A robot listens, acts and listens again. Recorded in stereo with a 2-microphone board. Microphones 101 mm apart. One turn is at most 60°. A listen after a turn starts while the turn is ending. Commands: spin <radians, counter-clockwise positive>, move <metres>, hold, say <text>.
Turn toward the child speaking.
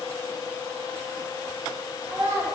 spin -0.52
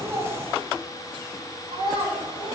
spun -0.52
spin -1.05
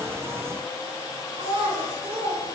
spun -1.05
spin -1.05
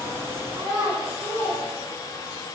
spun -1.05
spin -0.70
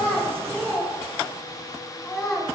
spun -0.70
say Found it: a child speaking, straight ahead, over 4 m away.